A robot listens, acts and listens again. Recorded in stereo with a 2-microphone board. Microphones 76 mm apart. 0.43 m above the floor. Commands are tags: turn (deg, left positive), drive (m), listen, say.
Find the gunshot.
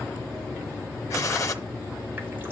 <turn deg="45"/>
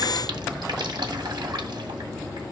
<listen/>
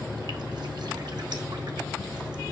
<say>I heard a gunshot, but can't make it out now. It was about straight ahead or 90° left.</say>